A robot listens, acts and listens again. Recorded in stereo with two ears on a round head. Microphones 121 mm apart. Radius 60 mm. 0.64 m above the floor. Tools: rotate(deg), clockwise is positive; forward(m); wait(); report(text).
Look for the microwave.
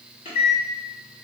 rotate(-40)
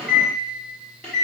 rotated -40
rotate(-10)
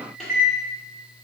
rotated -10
report("Found it: a microwave, straight ahead, 1 to 2 m away.")